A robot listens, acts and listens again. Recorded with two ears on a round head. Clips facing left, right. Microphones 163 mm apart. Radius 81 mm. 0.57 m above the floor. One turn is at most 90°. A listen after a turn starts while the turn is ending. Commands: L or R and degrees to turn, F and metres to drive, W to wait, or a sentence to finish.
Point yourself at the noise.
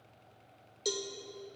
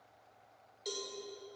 L60
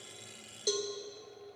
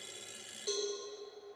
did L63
L55
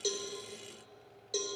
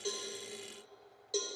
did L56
Facing the cowbell.